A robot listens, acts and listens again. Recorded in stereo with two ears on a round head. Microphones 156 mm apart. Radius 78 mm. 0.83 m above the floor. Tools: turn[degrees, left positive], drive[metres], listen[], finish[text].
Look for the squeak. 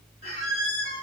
Thought: The squeak: about 40° left or 140° left.
Action: turn[40]
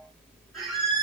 Action: finish[Found it: a squeak, straight ahead, 2 to 4 m away.]